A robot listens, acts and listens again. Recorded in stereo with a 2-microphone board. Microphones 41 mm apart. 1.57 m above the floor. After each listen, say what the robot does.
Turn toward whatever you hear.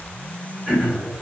Turn 30° left.
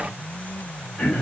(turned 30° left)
Turn 140° left.
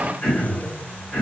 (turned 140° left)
Turn 10° left.
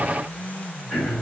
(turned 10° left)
Found it: throat clearing, straight ahead.